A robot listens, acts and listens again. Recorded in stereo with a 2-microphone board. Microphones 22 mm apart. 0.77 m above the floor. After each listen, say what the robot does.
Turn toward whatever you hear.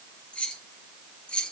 Turn 50° left.
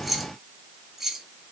Turn 20° right.
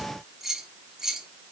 Turn 25° right.
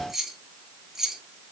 Turn 25° right.
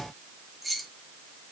Found it: keys jangling, straight ahead.